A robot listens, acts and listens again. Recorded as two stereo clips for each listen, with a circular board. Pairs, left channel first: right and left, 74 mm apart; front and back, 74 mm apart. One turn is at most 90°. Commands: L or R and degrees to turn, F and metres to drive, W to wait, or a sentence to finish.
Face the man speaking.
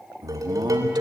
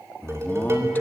L65
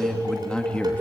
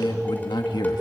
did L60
R15
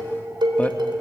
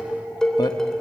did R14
R20
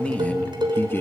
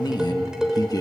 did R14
R30
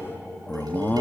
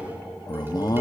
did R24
R25
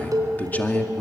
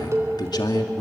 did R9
R25
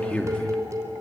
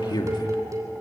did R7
R15
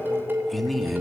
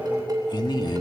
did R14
Facing the man speaking, 2 to 4 m away.